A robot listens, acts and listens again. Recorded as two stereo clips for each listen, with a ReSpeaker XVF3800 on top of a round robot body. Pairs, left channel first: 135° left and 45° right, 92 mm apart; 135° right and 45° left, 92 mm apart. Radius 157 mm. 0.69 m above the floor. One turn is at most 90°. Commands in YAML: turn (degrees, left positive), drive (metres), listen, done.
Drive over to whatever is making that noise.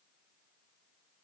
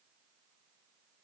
listen: true
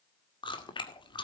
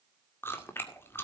turn: 90
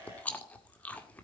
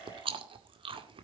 turn: 60
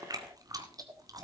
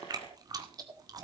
drive: 1.0
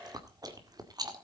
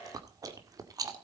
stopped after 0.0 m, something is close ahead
done: "Blocked. The chewing is further on, straight ahead."